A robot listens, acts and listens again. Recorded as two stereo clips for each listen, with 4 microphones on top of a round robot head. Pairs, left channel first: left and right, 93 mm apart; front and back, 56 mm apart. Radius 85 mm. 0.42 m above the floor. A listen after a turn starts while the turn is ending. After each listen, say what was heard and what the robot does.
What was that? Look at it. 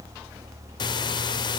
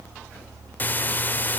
The breathing: 55° left. Turn 55° left.
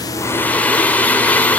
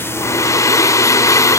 The breathing is now 15° left. Turn 15° left.
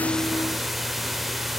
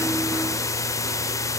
Facing the breathing, under 1 m away.